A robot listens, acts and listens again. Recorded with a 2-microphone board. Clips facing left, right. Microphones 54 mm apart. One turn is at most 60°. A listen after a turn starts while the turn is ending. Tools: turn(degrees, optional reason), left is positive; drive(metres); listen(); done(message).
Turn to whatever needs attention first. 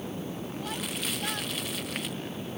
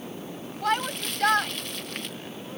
turn(degrees=-60, reason="The shout: about 60° right or 120° right.")
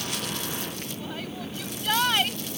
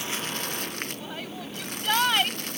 done("Found it: a shout, straight ahead.")